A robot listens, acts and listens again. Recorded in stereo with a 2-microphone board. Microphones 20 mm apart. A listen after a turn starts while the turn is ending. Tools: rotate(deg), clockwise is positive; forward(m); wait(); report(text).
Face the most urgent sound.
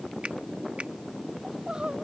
rotate(45)
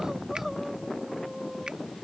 report("Facing the crying.")